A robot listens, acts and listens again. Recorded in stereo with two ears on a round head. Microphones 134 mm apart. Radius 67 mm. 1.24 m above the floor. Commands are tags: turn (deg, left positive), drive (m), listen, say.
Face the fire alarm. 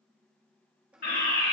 <turn deg="65"/>
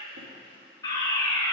<turn deg="25"/>
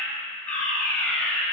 <turn deg="10"/>
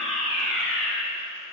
<say>Found it: a fire alarm, straight ahead.</say>